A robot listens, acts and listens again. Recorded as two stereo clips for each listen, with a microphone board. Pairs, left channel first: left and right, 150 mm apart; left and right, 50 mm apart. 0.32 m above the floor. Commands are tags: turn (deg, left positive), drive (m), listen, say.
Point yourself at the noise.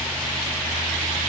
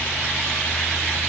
<listen/>
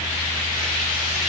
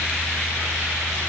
<listen/>
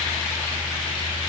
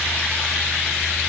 <say>I can't make out anything.</say>